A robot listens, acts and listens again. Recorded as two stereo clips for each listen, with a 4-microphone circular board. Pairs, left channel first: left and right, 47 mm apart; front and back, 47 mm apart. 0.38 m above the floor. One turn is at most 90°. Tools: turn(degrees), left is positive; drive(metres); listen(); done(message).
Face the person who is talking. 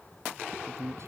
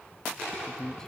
turn(degrees=-75)
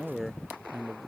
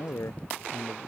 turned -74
done("Facing the man speaking.")